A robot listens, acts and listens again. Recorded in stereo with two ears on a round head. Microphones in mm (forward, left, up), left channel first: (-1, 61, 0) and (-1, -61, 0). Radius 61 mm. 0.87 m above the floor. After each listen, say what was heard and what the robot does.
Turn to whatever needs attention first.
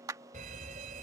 The fire alarm: about 60° right or 120° right. Turn 60° right.
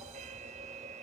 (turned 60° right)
So it is at 60° right. Turn 60° right.
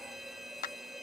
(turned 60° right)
Found it: a fire alarm, straight ahead.